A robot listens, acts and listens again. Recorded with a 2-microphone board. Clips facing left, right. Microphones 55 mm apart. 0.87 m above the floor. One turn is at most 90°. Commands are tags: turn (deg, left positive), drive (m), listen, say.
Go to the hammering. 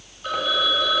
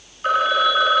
<listen/>
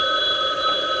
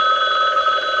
<listen/>
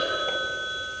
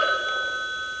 <say>I can't make out hammering, only a phone ringing.</say>